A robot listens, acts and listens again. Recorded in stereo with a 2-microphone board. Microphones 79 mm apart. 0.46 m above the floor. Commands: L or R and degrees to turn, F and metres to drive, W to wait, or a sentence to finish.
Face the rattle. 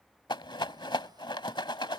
L90
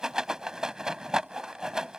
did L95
Found it: a rattle, straight ahead.